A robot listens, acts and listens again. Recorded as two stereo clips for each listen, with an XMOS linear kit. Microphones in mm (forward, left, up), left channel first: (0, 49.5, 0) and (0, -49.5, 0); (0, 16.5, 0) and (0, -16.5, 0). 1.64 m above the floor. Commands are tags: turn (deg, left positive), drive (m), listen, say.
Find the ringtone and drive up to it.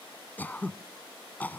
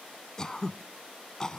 <listen/>
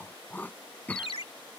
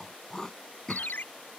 <turn deg="90"/>
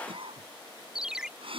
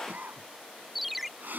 <drive m="1.0"/>
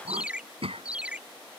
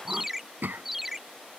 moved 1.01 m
<turn deg="-10"/>
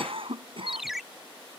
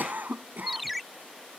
<drive m="1.0"/>
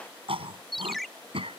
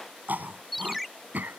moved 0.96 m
<drive m="1.0"/>
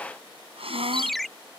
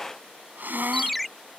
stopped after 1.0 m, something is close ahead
<say>Arrived at the ringtone, straight ahead.</say>